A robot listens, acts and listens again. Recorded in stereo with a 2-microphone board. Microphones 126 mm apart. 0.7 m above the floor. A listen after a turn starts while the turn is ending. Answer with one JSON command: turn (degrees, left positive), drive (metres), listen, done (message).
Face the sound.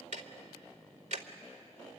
{"turn": -65}
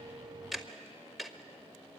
{"done": "Facing the ticking, 1 to 2 m away."}